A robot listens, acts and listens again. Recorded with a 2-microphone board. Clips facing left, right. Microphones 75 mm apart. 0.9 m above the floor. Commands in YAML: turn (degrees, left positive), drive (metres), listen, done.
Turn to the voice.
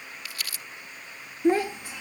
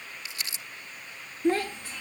turn: 30
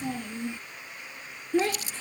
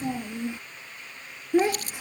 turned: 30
turn: -15
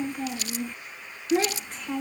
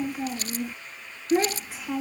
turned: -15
done: "Found it: a child speaking, straight ahead."